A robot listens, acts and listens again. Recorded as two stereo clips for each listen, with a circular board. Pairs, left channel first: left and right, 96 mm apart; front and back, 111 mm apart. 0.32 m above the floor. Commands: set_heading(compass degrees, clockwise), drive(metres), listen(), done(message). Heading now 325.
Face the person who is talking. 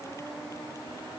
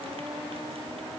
listen()
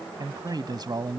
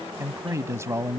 set_heading(85)
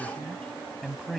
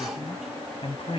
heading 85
done("Facing the man speaking.")